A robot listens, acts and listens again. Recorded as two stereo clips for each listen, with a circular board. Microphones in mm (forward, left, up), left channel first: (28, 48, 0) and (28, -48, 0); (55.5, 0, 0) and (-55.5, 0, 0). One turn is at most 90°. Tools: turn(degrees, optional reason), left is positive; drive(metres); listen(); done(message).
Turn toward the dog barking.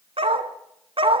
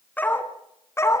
turn(degrees=-65, reason="The dog barking: 65° right.")
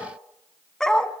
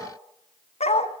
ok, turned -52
turn(degrees=10, reason="The dog barking is now 10° left.")
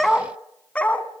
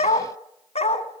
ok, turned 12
turn(degrees=15, reason="The dog barking is now 15° left.")
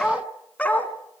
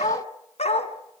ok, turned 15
turn(degrees=15, reason="The dog barking is now 15° left.")
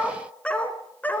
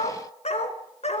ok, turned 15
turn(degrees=15, reason="The dog barking is now 15° left.")
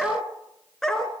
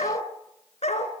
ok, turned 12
done("Facing the dog barking.")